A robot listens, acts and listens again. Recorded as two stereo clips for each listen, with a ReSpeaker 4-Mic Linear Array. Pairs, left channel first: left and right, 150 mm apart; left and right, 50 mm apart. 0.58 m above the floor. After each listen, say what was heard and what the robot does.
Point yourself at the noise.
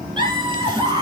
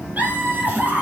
The laughter: about 30° right or 150° right. Turn 30° right.
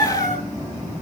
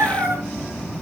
So it is at 120° right. Turn 120° right.
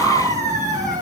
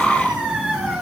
The laughter is now 20° right. Turn 20° right.
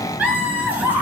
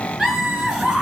The laughter is now 10° right. Turn 10° right.
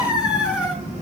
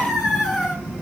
Found it: laughter, straight ahead.